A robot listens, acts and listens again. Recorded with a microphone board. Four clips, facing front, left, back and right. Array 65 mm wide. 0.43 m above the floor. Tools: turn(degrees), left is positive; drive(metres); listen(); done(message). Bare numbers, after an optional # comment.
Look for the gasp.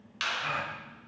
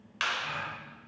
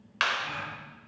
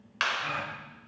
# The gasp: 30° right.
turn(-30)
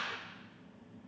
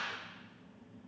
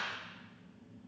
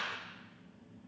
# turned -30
done("I heard a gasp from this way, but can't make it out now.")